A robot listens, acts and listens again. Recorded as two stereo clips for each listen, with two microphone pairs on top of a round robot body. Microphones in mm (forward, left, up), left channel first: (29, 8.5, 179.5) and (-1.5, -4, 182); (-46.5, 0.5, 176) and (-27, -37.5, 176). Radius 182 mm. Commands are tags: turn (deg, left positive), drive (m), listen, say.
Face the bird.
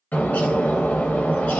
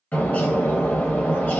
<turn deg="60"/>
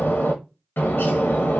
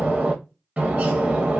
<say>Facing the bird, under 1 m away.</say>